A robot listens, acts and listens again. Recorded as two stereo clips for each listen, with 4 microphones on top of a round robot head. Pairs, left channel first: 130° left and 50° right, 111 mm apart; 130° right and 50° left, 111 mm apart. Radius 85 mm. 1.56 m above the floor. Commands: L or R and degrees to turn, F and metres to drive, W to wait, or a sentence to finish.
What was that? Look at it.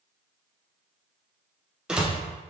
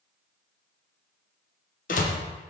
R135
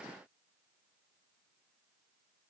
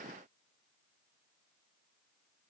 Facing where the door slam came from. I can't hear it now.